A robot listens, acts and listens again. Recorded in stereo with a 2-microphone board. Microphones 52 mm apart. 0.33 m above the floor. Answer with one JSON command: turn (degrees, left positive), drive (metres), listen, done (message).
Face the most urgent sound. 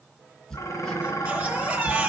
{"turn": -25}
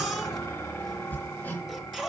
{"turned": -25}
{"done": "Facing the baby crying, 2 to 4 m away."}